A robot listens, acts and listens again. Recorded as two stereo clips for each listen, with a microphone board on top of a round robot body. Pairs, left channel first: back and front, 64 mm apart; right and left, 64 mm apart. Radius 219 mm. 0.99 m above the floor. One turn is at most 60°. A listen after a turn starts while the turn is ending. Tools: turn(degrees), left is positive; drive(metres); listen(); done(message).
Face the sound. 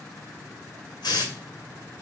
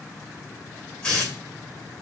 turn(degrees=-60)
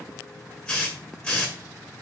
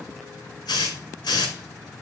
turn(degrees=-60)
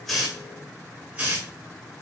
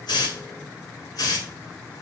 turn(degrees=-60)
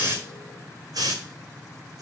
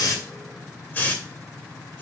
turn(degrees=-30)
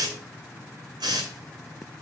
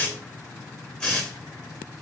turn(degrees=-15)
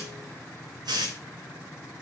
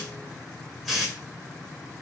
done("Facing the hiss.")